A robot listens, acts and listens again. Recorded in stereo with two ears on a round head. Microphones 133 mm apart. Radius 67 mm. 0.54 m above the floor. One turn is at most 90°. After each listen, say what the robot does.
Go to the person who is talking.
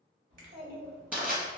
Turn 50° right.
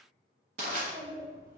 Turn 75° right.
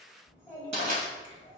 Drive 1.0 m forward.
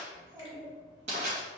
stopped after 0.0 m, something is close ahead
Something is in my way. I am facing the child speaking but have not reached it.